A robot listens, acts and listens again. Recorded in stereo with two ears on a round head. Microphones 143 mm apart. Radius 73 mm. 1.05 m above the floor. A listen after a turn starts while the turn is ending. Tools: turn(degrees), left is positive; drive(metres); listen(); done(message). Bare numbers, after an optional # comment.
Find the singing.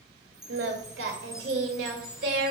turn(-90)
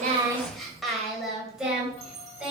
done("Found it: singing, straight ahead.")